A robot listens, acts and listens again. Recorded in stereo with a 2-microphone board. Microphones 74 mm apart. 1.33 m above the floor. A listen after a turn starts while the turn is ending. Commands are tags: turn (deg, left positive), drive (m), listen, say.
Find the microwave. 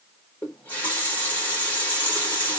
<listen/>
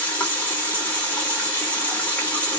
<listen/>
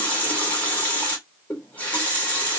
<say>I can't make out a microwave to turn to.</say>